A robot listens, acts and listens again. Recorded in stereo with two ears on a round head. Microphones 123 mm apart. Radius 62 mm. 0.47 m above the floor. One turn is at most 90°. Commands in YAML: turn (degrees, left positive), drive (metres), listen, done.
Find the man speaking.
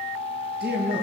turn: -90
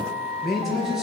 done: "Found it: a man speaking, straight ahead, over 4 m away."